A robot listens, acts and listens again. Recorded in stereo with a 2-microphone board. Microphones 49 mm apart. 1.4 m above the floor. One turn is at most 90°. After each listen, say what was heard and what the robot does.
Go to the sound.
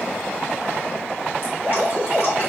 The dripping: about 55° right or 125° right. Turn 55° right.
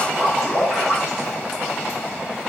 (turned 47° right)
So it is at 10° right. Turn 10° right.
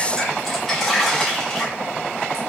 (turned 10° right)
Drive 1.0 m forward.
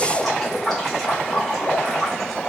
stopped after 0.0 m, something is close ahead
Something is in my way. I am facing the dripping but have not reached it.